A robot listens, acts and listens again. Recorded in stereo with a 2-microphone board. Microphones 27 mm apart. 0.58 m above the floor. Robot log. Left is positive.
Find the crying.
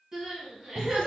note: The crying: about 30° right or 150° right.
cmd yaw -30
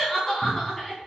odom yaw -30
end: Found it: crying, straight ahead, 2 to 4 m away.